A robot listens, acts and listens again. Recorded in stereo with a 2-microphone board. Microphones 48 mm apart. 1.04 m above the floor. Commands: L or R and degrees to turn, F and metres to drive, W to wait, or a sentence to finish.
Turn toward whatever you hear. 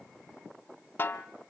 L45
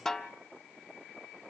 Facing the snare drum, 1 to 2 m away.